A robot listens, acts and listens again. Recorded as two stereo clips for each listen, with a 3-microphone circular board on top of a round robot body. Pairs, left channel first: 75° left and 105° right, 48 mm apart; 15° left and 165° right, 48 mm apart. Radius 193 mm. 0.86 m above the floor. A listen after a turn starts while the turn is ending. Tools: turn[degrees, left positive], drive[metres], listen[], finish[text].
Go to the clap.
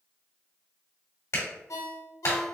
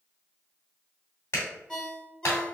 Thought: The clap: 50° left.
Action: turn[50]
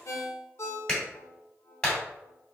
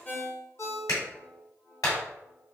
Action: drive[1.0]
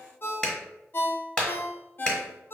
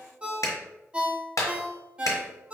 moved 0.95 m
Action: drive[1.0]
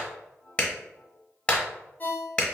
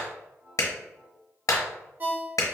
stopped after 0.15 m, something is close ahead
Thought: The clap is now 10° left.
Action: turn[10]
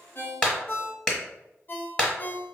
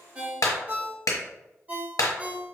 Action: finish[Arrived at the clap, straight ahead.]